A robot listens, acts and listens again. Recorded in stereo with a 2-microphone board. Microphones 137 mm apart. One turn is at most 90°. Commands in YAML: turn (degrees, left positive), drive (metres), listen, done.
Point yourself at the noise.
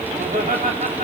turn: -90
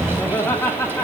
turn: 20
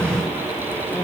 listen: true
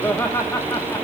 turn: 20
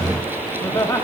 turn: 20
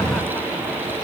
listen: true
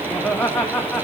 done: "Facing the laughter."